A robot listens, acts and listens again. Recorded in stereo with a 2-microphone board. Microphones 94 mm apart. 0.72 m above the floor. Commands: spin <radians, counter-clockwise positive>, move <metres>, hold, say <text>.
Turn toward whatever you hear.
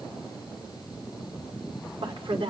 spin -1.22
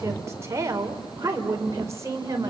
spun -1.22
spin -0.61
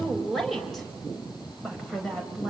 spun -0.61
say Facing the woman speaking, over 4 m away.